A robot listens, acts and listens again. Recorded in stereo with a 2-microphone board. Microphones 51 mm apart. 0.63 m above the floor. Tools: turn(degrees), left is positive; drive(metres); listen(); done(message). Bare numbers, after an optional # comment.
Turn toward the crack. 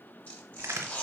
# The crack: about 70° right or 110° right.
turn(-70)
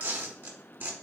listen()
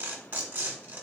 done("I heard a crack, but can't make it out now. It was about straight ahead or 40° right.")